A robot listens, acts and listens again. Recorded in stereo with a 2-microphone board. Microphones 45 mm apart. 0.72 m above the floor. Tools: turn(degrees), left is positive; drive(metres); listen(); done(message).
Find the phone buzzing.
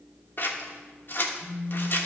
turn(degrees=-30)
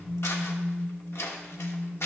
done("Found it: a phone buzzing, straight ahead, 2 to 4 m away.")